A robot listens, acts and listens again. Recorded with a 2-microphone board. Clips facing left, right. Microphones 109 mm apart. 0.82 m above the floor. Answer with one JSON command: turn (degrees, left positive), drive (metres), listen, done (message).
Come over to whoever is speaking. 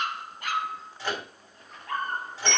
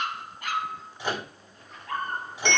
{"listen": true}
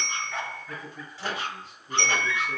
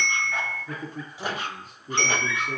{"turn": -45}
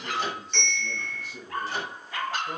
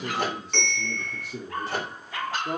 {"turn": -85}
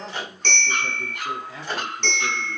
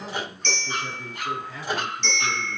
{"turn": 25}
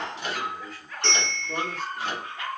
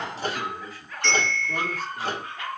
{"drive": 1.0}
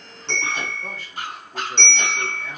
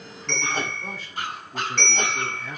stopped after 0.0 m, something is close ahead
{"listen": true}
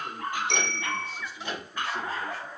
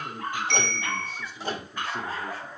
{"done": "Blocked. The man speaking is further on, straight ahead."}